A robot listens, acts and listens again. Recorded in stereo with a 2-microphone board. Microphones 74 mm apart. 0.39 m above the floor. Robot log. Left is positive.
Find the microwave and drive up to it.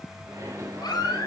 note: The microwave: about 50° right or 130° right.
cmd yaw -50
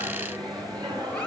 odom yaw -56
note: So it is at 75° right.
cmd yaw -75
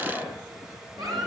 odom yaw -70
cmd fwd 1.0
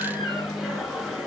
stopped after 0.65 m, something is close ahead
end: Blocked. The microwave is further on, straight ahead.